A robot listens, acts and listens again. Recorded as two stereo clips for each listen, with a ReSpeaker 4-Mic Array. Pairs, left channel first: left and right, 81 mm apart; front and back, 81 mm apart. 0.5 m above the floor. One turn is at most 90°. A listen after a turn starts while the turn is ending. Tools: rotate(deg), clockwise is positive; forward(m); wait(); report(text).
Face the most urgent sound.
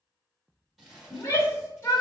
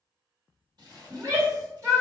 rotate(-90)
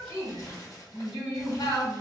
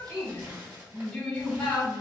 rotate(-75)
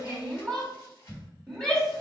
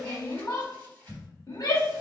rotate(-15)
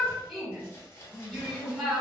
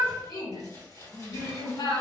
report("Facing the shout, 1 to 2 m away.")